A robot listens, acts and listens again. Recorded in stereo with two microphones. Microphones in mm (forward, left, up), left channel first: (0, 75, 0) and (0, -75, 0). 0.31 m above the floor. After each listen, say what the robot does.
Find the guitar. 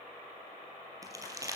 Keep listening.
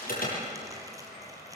Keep listening.
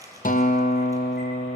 Turn 65° left.
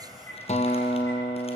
Turn 50° left.
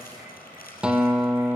Facing the guitar, 1 to 2 m away.